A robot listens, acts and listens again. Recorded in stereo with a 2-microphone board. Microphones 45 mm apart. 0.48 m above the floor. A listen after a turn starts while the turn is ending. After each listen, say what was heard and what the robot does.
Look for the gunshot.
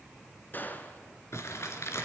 The gunshot: about 40° left or 140° left. Turn 40° left.
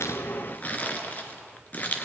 Keep listening.
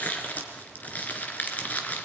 I heard a gunshot, but can't make it out now. It was about straight ahead or 100° left.